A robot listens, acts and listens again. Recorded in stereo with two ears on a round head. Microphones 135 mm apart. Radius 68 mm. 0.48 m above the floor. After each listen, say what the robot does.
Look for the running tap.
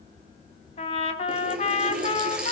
Turn 30° right.
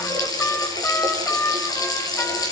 Turn 25° left.
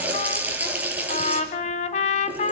Turn 10° right.
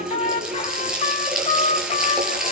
Found it: a running tap, straight ahead.